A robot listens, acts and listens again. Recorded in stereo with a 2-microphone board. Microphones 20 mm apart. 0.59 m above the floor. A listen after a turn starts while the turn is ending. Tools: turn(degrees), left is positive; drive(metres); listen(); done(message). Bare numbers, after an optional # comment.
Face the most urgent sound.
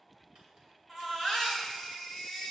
turn(30)
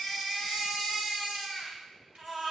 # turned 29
# So it is at 25° right.
turn(-25)
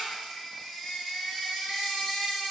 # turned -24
done("Facing the baby crying.")